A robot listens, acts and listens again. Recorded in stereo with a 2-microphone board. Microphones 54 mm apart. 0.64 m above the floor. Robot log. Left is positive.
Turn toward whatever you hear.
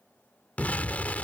note: The explosion: about 30° left or 150° left.
cmd yaw +30
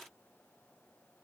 cmd idle
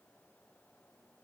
end: I heard an explosion, but can't make it out now. It was about straight ahead or 120° left.